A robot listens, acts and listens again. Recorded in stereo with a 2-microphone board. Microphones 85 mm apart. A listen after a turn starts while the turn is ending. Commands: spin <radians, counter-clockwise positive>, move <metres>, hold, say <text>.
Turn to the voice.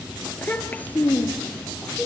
spin 0.35
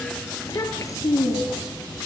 spin 2.44
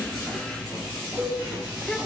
hold
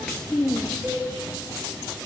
spin 0.17
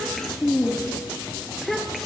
say Found it: a child speaking, straight ahead.